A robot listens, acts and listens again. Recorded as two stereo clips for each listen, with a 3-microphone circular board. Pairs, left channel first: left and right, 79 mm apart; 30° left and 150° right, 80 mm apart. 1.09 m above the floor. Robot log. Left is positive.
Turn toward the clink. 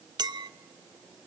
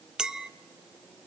note: The clink: 70° right.
cmd yaw -70
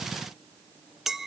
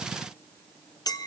end: Found it: a clink, straight ahead, under 1 m away.